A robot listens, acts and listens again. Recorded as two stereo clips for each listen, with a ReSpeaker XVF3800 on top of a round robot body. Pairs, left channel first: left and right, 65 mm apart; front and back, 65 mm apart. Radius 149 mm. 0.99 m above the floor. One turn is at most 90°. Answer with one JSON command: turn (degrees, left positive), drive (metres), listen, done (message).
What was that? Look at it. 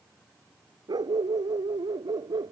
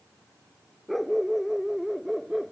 {"turn": -90}
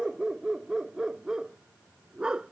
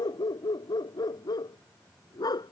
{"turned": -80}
{"turn": -15}
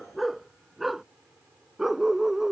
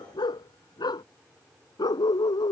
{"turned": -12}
{"done": "Found it: a dog barking, straight ahead."}